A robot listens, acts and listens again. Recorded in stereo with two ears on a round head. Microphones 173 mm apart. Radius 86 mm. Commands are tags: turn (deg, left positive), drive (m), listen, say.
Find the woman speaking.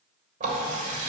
<listen/>
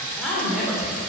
<turn deg="-30"/>
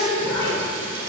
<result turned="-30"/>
<turn deg="15"/>
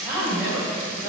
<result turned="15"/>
<turn deg="-15"/>
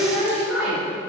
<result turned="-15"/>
<say>Found it: a woman speaking, straight ahead, over 4 m away.</say>